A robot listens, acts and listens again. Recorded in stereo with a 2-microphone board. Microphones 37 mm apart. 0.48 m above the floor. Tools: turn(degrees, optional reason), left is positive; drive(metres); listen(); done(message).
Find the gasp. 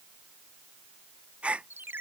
turn(degrees=-30, reason="The gasp: about 30° right or 150° right.")
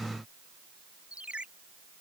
listen()
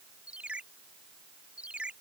done("I heard a gasp, but can't make it out now. It was about straight ahead or 120° right.")